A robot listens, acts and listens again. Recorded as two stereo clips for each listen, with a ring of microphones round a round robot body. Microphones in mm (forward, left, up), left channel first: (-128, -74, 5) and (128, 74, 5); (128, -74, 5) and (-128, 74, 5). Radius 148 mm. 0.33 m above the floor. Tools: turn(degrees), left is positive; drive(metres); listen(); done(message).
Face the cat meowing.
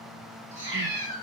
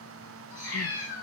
turn(degrees=80)
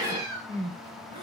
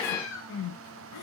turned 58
turn(degrees=20)
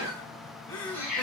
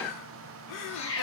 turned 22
turn(degrees=-20)
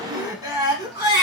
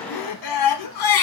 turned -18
listen()
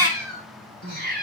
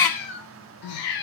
turn(degrees=-35)
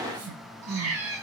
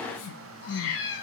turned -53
turn(degrees=15)
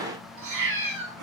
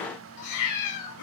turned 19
done("Facing the cat meowing.")